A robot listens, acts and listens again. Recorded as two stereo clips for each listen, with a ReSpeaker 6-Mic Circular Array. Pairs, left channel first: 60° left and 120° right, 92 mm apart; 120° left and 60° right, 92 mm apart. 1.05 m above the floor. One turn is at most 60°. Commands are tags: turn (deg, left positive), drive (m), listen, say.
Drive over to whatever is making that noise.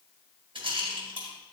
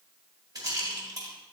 <turn deg="-60"/>
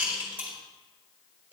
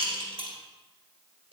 <turn deg="-45"/>
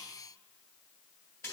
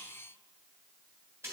<drive m="1.0"/>
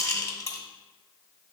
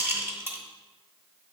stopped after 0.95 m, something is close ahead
<say>I am next to the rattle.</say>